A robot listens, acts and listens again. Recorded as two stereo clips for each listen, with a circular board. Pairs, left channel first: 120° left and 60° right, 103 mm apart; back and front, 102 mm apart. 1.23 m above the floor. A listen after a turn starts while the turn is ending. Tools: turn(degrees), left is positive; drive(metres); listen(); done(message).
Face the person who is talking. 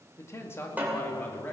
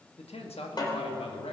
turn(degrees=-170)
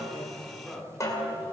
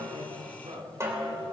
turn(degrees=30)
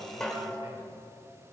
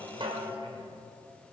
listen()
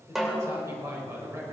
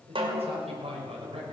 done("Found it: a man speaking, straight ahead, over 4 m away.")